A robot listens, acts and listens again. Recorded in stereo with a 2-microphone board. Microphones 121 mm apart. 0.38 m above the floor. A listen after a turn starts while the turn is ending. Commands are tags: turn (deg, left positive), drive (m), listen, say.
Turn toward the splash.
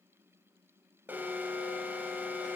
<listen/>
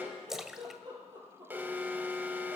<turn deg="-30"/>
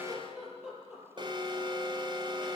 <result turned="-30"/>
<listen/>
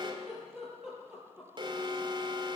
<say>I heard a splash, but can't make it out now. It was about 25° left or 145° right.</say>